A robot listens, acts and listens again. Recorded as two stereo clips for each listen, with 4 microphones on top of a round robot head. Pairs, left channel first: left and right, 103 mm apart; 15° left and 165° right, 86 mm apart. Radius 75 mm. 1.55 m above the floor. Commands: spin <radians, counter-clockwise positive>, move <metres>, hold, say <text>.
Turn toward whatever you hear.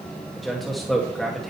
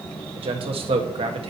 spin 3.14
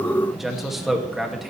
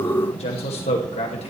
say Found it: a man speaking, straight ahead, 2 to 4 m away.